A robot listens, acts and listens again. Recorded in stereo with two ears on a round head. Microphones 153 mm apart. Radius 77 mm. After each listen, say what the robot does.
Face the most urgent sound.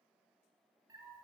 Keep listening.
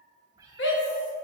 Turn 75° left.
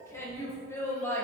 Turn 15° left.
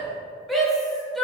Facing the shout, 1 to 2 m away.